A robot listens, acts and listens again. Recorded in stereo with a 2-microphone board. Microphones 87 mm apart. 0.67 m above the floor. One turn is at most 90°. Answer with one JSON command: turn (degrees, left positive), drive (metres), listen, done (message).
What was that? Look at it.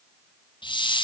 {"turn": 70}
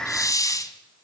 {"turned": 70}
{"turn": 40}
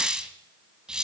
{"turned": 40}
{"turn": -10}
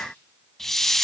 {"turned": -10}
{"done": "Facing the hiss."}